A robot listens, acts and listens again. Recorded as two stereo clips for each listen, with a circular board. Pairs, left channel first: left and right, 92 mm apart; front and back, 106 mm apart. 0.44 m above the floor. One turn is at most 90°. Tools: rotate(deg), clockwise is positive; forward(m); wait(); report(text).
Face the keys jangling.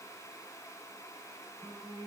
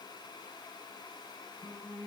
wait()
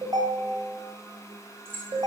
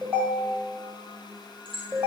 rotate(90)
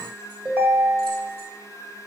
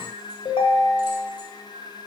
rotate(60)
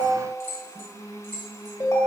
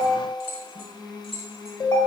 rotate(-25)
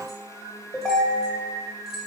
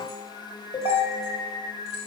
wait()
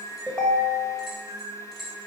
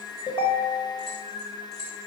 report("Facing the keys jangling.")